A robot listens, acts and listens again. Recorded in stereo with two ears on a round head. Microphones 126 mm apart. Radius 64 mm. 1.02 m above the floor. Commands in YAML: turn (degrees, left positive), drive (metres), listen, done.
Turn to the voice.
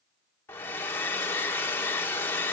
listen: true
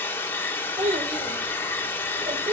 turn: -50
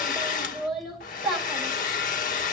done: "Facing the child speaking, 2 to 4 m away."